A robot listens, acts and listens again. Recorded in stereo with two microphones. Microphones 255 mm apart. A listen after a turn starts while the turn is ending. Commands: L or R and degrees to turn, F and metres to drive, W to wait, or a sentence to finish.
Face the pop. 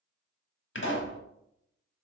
L50
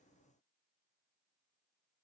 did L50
W
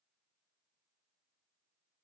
I heard a pop, but can't make it out now. It was about straight ahead or 80° left.